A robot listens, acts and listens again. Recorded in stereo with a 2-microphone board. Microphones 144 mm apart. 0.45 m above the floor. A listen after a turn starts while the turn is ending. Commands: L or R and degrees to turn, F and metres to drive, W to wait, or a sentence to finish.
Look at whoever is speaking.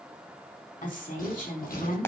L65
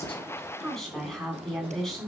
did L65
Facing the woman speaking, over 4 m away.